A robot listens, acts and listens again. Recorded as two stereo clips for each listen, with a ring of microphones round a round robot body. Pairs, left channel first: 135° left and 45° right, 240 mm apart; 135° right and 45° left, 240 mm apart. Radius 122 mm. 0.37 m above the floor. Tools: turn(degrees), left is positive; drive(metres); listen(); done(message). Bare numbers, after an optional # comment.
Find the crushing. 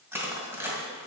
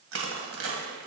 # The crushing: 35° left.
turn(35)
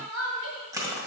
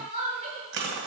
# The crushing is now 30° left.
turn(30)
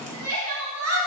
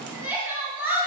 listen()
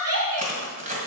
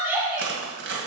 # The crushing is now 10° left.
turn(10)
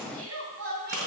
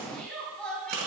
done("Found it: crushing, straight ahead, 2 to 4 m away.")